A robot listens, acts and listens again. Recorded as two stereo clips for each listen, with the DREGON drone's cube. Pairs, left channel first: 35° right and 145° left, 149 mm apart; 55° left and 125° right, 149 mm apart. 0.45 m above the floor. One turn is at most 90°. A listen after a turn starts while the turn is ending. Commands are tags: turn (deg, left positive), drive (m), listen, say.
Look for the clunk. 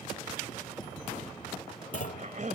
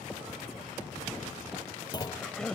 <say>Found it: a clunk, straight ahead.</say>